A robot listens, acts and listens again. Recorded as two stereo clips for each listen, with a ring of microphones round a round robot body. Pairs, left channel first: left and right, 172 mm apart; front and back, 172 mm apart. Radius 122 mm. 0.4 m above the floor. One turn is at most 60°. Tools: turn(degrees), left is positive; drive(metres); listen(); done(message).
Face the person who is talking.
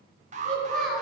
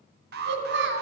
turn(degrees=60)
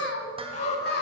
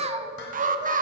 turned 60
turn(degrees=60)
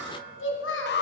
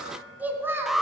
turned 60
turn(degrees=60)
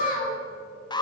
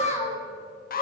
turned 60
turn(degrees=55)
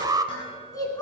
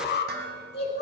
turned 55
turn(degrees=20)
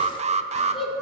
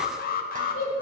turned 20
done("Found it: a child speaking, straight ahead.")